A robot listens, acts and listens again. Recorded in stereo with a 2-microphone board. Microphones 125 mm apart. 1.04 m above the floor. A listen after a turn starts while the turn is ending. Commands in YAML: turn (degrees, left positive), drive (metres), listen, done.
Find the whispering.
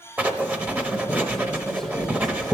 listen: true
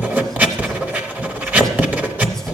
listen: true
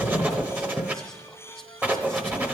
done: "I can't make out whispering to turn to."